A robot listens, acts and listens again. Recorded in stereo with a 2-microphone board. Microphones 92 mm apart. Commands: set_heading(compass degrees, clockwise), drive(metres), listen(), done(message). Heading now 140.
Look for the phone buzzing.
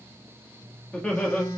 set_heading(100)
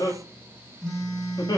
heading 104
done("Facing the phone buzzing.")